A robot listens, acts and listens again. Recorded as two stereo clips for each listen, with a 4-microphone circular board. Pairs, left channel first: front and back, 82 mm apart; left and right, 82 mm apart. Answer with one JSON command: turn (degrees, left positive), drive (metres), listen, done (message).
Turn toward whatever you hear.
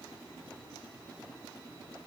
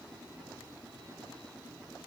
{"listen": true}
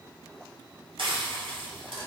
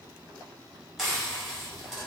{"turn": -175}
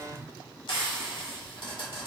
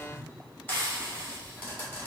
{"turn": 25}
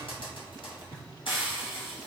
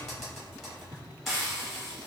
{"done": "Found it: frying, straight ahead, 1 to 2 m away."}